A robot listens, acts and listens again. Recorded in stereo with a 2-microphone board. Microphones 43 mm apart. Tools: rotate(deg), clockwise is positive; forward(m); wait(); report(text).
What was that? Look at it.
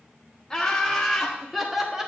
rotate(30)
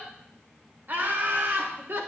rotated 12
rotate(120)
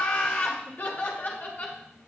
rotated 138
rotate(-45)
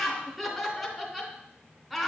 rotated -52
report("Facing the laughter.")